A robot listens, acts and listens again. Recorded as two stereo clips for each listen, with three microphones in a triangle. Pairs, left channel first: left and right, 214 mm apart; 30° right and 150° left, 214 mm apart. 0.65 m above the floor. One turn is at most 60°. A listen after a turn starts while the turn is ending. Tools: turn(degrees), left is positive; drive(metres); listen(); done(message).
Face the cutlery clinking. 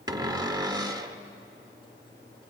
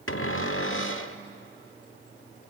listen()
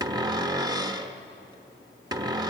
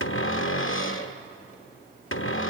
listen()
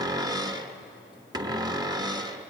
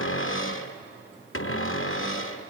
done("I can't make out cutlery clinking, only a cupboard door.")